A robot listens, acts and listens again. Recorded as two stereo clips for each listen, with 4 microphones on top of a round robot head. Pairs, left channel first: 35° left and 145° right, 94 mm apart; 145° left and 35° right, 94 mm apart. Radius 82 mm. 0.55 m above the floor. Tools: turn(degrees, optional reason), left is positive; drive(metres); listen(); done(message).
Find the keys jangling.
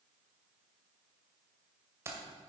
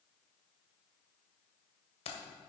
turn(degrees=155, reason="The keys jangling: 155° left.")
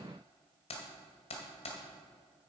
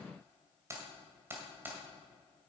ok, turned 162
turn(degrees=35, reason="The keys jangling is now 35° left.")
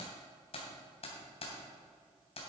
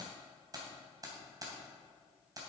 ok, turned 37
turn(degrees=20, reason="The keys jangling is now 20° left.")
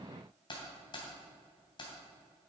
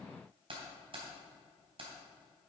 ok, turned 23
done("Facing the keys jangling.")